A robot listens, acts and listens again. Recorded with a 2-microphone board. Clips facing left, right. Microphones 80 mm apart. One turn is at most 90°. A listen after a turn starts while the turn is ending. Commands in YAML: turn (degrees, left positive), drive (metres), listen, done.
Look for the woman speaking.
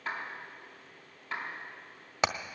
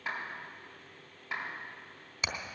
listen: true
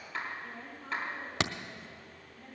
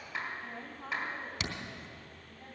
turn: -90
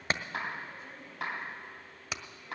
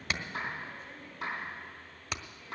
done: "Found it: a woman speaking, straight ahead."